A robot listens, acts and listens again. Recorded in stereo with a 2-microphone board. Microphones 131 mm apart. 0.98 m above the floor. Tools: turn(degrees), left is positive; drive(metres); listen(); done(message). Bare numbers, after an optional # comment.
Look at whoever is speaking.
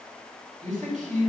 # The man speaking: about 70° right or 110° right.
turn(-70)
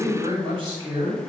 # So it is at 40° right.
turn(-40)
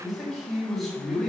done("Facing the man speaking.")